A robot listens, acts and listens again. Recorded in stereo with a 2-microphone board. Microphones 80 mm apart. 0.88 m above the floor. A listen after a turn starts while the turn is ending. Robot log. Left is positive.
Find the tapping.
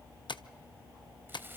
cmd yaw +90
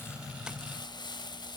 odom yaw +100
note: Nothing new. It was at 10° right.
cmd yaw -10
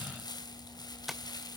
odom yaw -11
end: Facing the tapping.